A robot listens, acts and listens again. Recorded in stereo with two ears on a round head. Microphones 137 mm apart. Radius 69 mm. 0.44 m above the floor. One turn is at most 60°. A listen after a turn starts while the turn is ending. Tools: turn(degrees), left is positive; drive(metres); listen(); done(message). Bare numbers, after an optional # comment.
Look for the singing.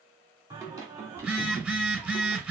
# The singing: about 20° right or 160° right.
turn(-20)
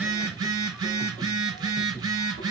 done("Found it: singing, straight ahead.")